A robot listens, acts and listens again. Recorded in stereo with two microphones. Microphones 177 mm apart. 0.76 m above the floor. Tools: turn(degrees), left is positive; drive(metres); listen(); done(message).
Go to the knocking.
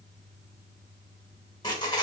listen()
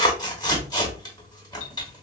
listen()
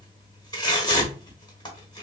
done("I can't make out knocking to turn to.")